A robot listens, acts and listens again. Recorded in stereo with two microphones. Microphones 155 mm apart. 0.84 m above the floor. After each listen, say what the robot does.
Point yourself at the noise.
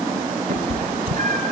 Turn 60° right.
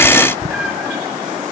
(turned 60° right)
Found it: a cat meowing, straight ahead.